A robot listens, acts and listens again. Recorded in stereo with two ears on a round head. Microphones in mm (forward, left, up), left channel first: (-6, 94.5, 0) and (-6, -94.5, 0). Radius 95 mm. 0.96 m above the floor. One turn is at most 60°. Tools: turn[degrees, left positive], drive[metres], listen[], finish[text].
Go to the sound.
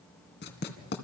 Thought: The writing: about 55° left or 125° left.
Action: turn[55]
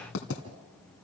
Thought: So it is at 65° left.
Action: turn[60]
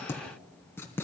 Thought: The writing is now 10° left.
Action: turn[10]
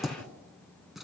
Action: drive[1.0]
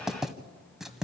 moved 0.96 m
Action: drive[1.0]
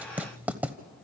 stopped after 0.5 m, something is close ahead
Thought: The writing is now 10° right.
Action: turn[-10]
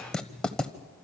Action: finish[Arrived at the writing, straight ahead.]